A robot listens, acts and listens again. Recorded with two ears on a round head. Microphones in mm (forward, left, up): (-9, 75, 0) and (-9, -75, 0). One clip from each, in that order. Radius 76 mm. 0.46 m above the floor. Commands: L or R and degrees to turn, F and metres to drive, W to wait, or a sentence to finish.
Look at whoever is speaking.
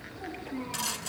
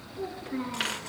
R45
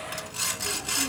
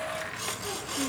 W
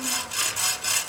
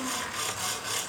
W
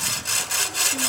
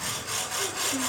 I heard a child speaking, but can't make it out now. It was about straight ahead or 90° right.